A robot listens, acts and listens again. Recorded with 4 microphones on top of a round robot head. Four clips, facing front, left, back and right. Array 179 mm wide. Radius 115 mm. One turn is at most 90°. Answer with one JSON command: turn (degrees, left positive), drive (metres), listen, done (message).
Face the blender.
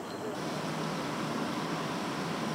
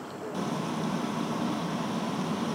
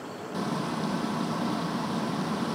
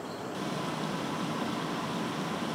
{"listen": true}
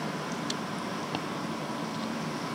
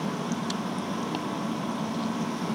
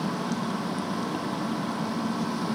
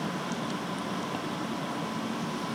{"listen": true}
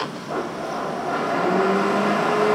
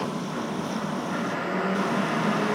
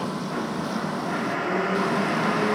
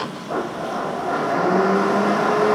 {"turn": -60}
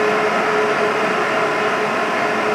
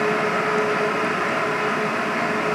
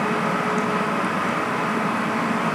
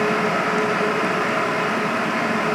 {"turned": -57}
{"done": "Facing the blender, under 1 m away."}